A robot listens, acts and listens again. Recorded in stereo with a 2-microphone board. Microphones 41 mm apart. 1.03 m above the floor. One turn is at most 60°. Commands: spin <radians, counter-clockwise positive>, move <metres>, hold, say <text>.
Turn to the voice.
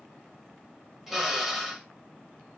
hold
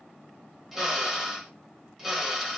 hold
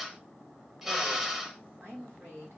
spin -1.05
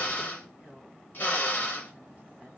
spin -0.70
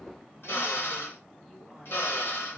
hold
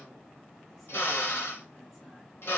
hold
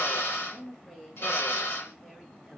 say Found it: a woman speaking, straight ahead.